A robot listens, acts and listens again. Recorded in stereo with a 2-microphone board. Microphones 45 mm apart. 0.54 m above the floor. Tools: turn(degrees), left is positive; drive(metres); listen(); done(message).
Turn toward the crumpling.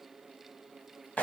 listen()
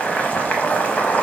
listen()
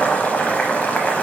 done("I can't make out crumpling to turn to.")